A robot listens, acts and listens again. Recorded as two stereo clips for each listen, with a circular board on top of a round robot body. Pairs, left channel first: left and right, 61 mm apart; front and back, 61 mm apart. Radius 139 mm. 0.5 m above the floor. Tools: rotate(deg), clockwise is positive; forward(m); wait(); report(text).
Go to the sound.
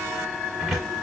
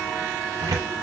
rotate(-180)
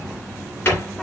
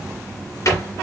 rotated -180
rotate(-30)
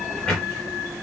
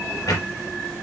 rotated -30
forward(1.0)
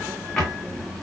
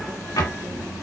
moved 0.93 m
rotate(-10)
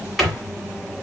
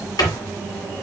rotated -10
forward(1.0)
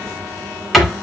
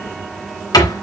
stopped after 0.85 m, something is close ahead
report("Arrived at the cupboard door, straight ahead.")